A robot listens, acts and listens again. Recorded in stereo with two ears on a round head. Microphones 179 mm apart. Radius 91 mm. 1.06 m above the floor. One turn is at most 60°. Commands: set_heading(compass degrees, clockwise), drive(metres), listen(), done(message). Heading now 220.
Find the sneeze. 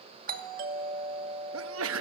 set_heading(280)
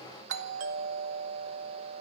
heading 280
listen()
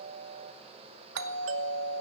done("I heard a sneeze, but can't make it out now. It was about 10° right or 50° right.")